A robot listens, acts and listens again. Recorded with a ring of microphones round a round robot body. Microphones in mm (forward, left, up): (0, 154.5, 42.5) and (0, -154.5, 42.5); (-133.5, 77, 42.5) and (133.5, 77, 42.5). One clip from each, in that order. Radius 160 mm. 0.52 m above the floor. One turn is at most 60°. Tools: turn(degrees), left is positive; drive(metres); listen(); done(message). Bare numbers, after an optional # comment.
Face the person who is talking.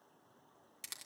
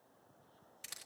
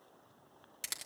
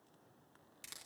listen()
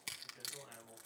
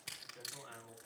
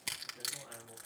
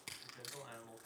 done("Found it: a man speaking, straight ahead.")